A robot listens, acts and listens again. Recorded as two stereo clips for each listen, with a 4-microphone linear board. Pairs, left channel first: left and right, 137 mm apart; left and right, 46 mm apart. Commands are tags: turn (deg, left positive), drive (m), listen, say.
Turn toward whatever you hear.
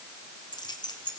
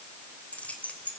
<turn deg="30"/>
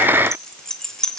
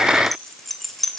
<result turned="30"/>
<say>Facing the keys jangling.</say>